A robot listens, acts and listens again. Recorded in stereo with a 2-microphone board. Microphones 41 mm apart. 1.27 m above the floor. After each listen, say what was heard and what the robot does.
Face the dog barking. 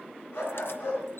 The dog barking: about 55° left or 125° left. Turn 55° left.
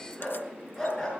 Facing the dog barking, over 4 m away.